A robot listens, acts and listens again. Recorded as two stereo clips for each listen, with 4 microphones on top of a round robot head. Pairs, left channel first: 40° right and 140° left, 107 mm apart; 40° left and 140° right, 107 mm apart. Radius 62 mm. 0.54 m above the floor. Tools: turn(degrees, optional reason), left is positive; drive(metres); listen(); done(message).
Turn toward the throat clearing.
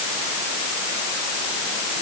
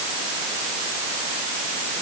listen()
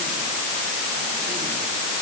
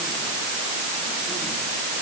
listen()
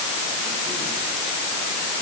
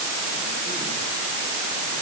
done("I can't make out throat clearing.")